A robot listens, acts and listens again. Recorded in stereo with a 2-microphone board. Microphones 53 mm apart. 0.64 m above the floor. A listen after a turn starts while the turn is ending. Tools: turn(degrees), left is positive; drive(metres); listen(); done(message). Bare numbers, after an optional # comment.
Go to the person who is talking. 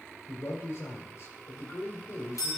# The man speaking: about 55° left or 125° left.
turn(55)
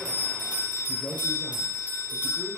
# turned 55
# So it is at 60° left.
turn(60)
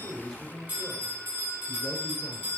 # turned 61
drive(1.0)
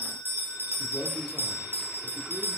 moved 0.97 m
listen()
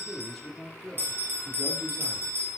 drive(1.0)
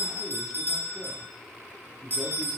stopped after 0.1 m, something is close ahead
# The man speaking is now 10° left.
turn(10)
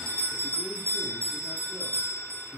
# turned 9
done("I am next to the man speaking.")